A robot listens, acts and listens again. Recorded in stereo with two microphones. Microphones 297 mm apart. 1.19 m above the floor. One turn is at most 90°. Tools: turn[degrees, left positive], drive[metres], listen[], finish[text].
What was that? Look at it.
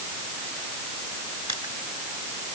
Thought: The crushing: about 70° right or 110° right.
Action: turn[-70]
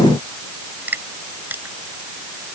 Action: finish[Facing the crushing.]